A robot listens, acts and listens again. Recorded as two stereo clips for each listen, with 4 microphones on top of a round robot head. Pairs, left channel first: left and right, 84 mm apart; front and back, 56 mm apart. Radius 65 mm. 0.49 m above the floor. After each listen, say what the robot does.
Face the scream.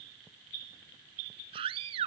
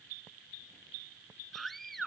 Turn 85° right.
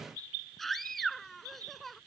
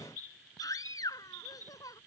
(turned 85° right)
Found it: a scream, straight ahead.